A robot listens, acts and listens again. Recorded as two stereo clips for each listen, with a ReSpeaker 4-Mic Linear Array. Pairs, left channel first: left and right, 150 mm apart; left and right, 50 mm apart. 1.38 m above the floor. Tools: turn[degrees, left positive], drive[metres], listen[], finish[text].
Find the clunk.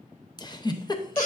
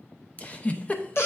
Action: listen[]
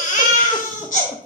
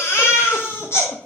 Action: listen[]
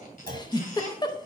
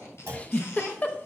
Action: turn[-90]
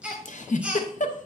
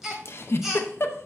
Action: finish[Facing where the clunk came from. I can't hear it now.]